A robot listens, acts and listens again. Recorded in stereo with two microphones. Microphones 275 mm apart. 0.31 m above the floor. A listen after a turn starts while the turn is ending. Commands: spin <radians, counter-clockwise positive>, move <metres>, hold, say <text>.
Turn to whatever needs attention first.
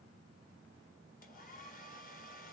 hold
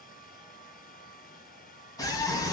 spin 0.52
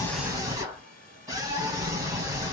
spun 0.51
spin -0.26
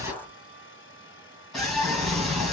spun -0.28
say Found it: a scream, straight ahead, 1 to 2 m away.